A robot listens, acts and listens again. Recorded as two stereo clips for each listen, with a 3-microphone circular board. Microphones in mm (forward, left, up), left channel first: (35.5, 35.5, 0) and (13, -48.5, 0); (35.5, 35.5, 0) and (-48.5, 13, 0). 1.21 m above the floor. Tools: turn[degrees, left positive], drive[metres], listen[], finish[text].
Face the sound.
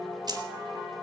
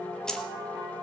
Thought: The keys jangling: 65° right.
Action: turn[-65]
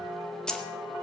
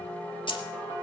Action: finish[Found it: keys jangling, straight ahead.]